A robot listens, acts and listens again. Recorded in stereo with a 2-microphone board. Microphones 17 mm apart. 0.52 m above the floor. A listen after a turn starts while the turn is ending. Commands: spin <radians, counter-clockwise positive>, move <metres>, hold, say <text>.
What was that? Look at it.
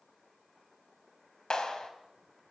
spin 0.79
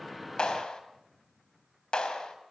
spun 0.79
spin 1.40
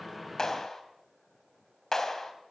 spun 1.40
spin 0.52
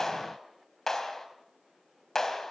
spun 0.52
spin 0.52
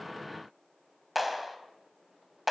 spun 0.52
say Found it: a clap, straight ahead, 2 to 4 m away.